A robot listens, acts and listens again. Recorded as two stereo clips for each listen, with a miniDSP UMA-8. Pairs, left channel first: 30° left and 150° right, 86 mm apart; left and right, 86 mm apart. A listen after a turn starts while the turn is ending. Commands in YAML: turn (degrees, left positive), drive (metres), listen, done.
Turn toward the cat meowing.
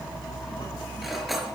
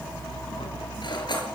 listen: true
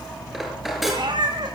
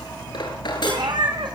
turn: -120
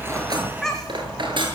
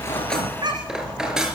turn: -55
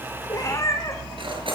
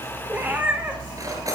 turn: -20
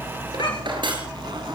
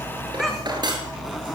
listen: true
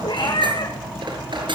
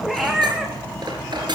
done: "Facing the cat meowing."